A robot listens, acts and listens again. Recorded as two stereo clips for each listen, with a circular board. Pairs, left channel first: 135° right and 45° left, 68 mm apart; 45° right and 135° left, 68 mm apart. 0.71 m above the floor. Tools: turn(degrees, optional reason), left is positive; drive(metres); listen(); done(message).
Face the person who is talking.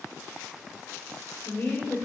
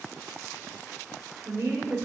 turn(degrees=170, reason="The woman speaking: 170° left.")
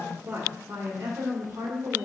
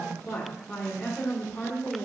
turn(degrees=25, reason="The woman speaking is now 25° left.")
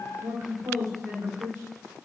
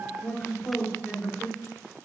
turn(degrees=15, reason="The woman speaking is now 15° left.")
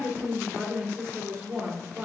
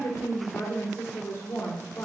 done("Facing the woman speaking.")